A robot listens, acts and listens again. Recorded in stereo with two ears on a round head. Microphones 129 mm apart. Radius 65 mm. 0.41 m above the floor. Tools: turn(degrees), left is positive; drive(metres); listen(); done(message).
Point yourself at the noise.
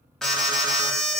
turn(degrees=30)
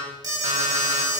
turn(degrees=-30)
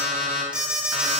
done("Found it: an alarm, straight ahead, 2 to 4 m away.")